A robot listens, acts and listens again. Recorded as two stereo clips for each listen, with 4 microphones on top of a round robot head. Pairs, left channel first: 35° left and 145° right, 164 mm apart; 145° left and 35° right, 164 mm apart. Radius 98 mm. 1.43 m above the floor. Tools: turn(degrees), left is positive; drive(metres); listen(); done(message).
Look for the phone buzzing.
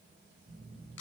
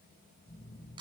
turn(degrees=-145)
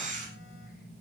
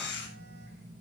turn(degrees=-10)
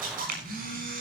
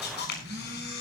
done("Facing the phone buzzing.")